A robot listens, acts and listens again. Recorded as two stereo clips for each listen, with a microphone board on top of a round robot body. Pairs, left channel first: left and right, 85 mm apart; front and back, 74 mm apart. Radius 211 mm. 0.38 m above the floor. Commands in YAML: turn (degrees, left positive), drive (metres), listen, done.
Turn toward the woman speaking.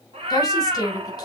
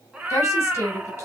turn: 50
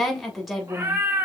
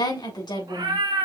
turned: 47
done: "Facing the woman speaking."